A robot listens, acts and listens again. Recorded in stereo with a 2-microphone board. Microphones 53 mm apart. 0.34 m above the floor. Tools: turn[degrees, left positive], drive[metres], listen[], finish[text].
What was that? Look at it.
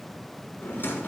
Thought: The drawer: about 45° left or 135° left.
Action: turn[45]
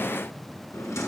Thought: So it is at 85° left.
Action: turn[85]
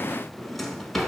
Action: finish[Found it: a drawer, straight ahead.]